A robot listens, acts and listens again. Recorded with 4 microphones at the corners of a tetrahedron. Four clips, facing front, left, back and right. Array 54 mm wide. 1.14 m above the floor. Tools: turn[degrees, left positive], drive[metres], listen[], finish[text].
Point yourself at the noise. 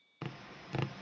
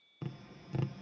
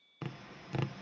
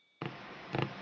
Thought: The tapping: 90° right.
Action: turn[-90]
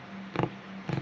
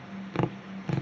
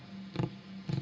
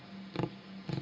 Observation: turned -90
Thought: The tapping is now 40° left.
Action: turn[40]
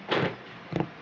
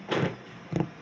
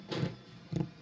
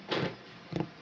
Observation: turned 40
Thought: The tapping is now 20° left.
Action: turn[20]
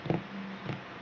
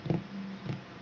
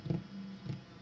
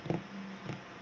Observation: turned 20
Action: finish[Facing the tapping.]